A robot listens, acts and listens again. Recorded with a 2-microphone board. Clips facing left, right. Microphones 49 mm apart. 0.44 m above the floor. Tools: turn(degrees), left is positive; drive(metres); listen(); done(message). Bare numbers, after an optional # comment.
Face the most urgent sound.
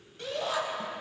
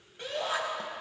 # The shout: about 20° right or 160° right.
turn(-20)
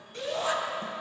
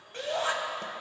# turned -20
# So it is at 140° right.
turn(-140)
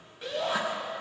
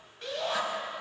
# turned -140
done("Found it: a shout, straight ahead.")